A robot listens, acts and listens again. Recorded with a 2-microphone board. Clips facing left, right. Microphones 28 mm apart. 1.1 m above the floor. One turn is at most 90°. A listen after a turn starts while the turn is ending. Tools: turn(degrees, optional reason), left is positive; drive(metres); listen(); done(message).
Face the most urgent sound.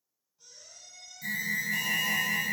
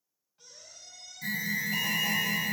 turn(degrees=-25, reason="The alarm: about 25° right or 155° right.")
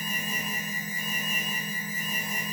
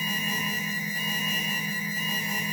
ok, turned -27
turn(degrees=-90, reason="So it is at 120° right.")
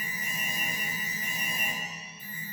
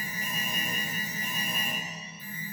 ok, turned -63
turn(degrees=-60, reason="The alarm is now 60° right.")
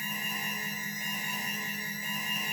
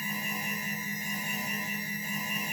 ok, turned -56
done("Found it: an alarm, straight ahead, 1 to 2 m away.")